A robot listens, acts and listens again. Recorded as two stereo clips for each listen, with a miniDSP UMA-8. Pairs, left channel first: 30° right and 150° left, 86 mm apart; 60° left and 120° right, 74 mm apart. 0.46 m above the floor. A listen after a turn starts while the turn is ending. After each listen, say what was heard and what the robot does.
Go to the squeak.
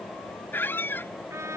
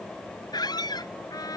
The squeak: 35° left. Turn 35° left.
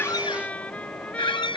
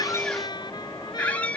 The squeak is now 10° right. Turn 10° right.
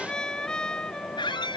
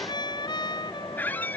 Drive 1.0 m forward.
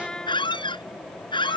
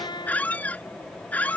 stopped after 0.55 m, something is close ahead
The squeak is now 10° right. Turn 10° right.
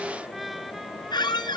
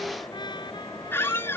Blocked. The squeak is further on, straight ahead.